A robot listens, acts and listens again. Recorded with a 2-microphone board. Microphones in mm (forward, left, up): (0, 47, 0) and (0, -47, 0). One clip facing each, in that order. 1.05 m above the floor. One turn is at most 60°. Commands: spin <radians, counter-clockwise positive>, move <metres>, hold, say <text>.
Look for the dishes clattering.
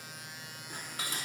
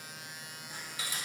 spin 0.96
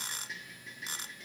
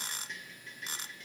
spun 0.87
say Found it: dishes clattering, straight ahead, 1 to 2 m away.